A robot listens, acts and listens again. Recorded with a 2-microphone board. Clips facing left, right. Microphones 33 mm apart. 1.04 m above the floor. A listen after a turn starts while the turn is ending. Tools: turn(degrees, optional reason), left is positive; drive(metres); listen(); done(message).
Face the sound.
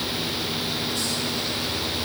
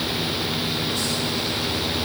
listen()
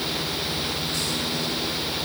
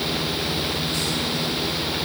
listen()
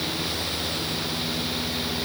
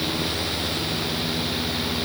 done("I can't make out anything.")